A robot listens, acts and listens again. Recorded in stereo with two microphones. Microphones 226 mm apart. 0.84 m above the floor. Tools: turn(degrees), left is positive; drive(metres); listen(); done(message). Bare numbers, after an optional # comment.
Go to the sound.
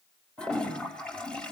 turn(30)
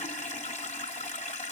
# So it is at 145° left.
turn(145)
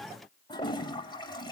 # The toilet flushing is now 20° left.
turn(20)
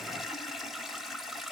drive(1.0)
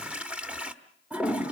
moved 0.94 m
drive(1.0)
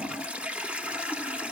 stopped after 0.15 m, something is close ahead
done("I am next to the toilet flushing.")